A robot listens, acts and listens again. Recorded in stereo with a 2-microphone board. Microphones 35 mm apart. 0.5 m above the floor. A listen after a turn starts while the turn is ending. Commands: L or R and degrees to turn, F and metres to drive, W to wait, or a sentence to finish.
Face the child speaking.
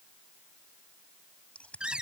W
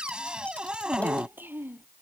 R75
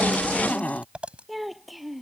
Found it: a child speaking, straight ahead.